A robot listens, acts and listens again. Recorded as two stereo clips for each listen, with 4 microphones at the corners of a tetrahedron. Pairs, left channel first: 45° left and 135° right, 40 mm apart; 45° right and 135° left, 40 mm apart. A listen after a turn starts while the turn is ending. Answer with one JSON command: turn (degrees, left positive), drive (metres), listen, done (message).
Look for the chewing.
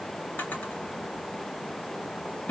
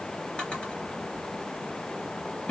{"listen": true}
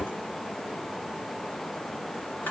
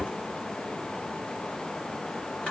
{"listen": true}
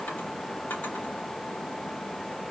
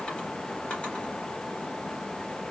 {"done": "I can't make out chewing to turn to."}